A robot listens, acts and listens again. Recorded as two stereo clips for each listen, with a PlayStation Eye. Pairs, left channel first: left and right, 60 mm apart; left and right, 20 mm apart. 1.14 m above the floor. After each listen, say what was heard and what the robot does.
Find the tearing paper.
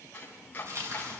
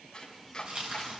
The tearing paper: about 65° right or 115° right. Turn 65° right.
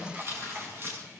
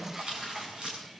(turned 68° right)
So it is at 50° right. Turn 50° right.
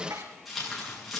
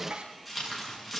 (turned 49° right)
Facing the tearing paper.